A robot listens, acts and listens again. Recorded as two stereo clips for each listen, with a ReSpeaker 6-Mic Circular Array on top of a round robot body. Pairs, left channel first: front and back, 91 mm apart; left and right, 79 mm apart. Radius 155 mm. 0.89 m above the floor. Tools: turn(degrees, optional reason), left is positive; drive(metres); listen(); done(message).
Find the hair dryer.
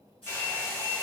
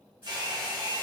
turn(degrees=-65, reason="The hair dryer: 65° right.")
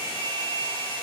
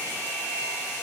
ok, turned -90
turn(degrees=25, reason="The hair dryer is now 25° left.")
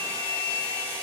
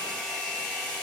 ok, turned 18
done("Facing the hair dryer, under 1 m away.")